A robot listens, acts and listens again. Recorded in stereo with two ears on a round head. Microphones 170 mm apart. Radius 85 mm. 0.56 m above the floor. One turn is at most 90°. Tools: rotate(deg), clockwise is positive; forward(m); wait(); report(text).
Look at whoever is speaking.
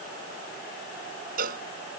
wait()
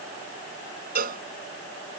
wait()
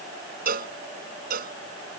report("I can't make out anyone speaking, only a cowbell.")